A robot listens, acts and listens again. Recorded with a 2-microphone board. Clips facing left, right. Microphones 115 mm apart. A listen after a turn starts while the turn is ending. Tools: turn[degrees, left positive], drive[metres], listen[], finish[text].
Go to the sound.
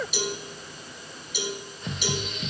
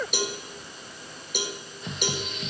Thought: The cowbell: about 55° right or 125° right.
Action: turn[-55]
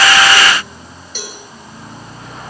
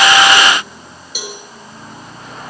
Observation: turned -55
Thought: So it is at 15° right.
Action: turn[-15]
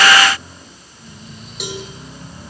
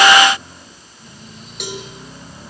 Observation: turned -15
Action: drive[1.0]
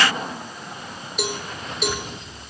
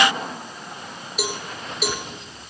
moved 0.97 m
Action: drive[1.0]
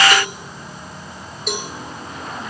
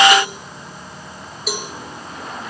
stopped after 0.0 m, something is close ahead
Action: finish[Arrived at the cowbell, straight ahead.]